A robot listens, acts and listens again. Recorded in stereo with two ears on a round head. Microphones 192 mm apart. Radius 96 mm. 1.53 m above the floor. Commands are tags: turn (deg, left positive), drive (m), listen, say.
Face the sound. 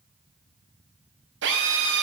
<turn deg="-60"/>
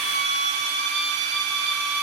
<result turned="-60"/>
<turn deg="-55"/>
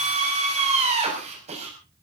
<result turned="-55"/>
<turn deg="-30"/>
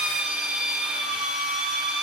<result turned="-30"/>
<say>Facing the drill.</say>